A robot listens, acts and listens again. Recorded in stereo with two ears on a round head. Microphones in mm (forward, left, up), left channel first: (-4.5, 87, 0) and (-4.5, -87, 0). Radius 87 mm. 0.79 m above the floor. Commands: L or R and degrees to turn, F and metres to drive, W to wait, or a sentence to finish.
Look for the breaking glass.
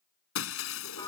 L90
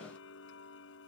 I heard breaking glass from this way, but can't make it out now.